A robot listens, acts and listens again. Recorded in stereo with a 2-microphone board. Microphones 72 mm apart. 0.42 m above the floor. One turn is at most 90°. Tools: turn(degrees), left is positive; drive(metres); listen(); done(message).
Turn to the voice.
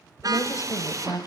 turn(degrees=60)
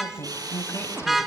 turn(degrees=40)
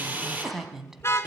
done("Facing the woman speaking, 2 to 4 m away.")